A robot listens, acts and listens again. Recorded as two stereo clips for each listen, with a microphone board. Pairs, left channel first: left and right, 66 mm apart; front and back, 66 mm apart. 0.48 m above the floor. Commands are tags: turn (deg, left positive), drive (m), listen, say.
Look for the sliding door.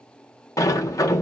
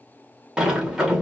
<turn deg="100"/>
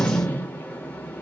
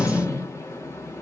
<turn deg="25"/>
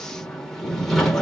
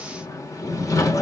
<say>Facing the sliding door.</say>